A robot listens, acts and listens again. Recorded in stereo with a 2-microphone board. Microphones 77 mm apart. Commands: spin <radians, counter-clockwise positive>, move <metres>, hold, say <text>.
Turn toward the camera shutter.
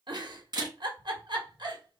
spin -0.96
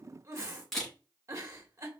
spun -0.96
say Found it: a camera shutter, straight ahead, 2 to 4 m away.